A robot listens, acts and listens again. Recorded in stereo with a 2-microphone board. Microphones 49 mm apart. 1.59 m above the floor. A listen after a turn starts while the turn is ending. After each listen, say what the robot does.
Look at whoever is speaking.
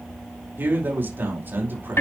Turn 50° right.
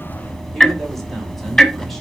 Keep listening.
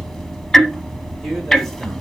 Keep listening.
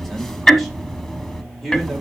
Facing the man speaking.